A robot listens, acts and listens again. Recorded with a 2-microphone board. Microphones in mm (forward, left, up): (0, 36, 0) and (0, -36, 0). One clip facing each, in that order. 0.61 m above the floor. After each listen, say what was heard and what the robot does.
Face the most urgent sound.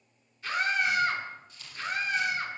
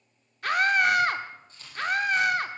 The scream: about 60° right or 120° right. Turn 60° right.
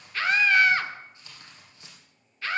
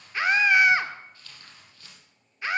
So it is at 20° right. Turn 20° right.
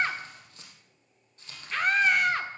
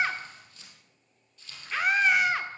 Found it: a scream, straight ahead.